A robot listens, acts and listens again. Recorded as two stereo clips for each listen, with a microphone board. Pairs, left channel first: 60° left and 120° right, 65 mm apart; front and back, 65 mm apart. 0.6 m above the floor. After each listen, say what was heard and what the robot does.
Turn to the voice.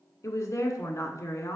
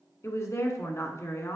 The woman speaking: 30° left. Turn 30° left.
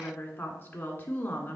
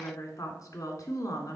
Facing the woman speaking, 1 to 2 m away.